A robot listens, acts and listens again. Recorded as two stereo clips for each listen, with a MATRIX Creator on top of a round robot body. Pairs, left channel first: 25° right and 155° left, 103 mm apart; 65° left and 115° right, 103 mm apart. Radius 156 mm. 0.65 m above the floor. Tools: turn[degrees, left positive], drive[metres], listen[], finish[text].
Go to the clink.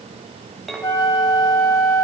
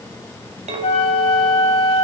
Thought: The clink: 110° right.
Action: turn[-110]
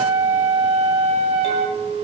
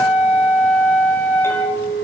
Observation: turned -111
Action: drive[1.0]
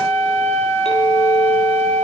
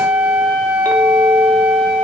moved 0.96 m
Action: listen[]
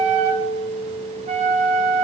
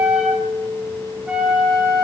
Action: drive[1.0]
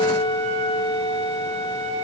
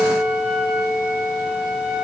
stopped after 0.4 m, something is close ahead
Action: finish[I am next to the clink.]